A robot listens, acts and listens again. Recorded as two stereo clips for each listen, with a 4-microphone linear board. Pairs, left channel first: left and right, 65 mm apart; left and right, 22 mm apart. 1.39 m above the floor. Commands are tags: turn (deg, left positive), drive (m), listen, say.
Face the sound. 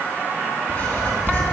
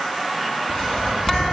<turn deg="30"/>
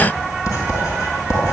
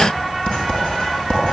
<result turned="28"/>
<turn deg="120"/>
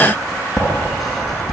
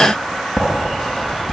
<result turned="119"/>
<say>Facing the writing.</say>